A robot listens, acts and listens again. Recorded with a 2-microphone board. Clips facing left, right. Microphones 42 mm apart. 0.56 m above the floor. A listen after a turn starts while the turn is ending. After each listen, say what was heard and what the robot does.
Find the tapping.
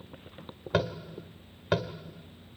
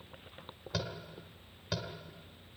The tapping: about 40° left or 140° left. Turn 40° left.
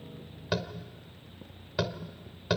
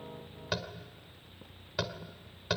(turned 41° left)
Facing the tapping.